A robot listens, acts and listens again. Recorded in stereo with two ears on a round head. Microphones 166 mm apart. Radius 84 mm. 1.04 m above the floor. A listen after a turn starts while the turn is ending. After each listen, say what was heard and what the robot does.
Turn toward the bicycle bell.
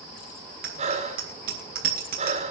The bicycle bell: about 50° right or 130° right. Turn 50° right.
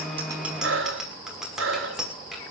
Found it: a bicycle bell, straight ahead.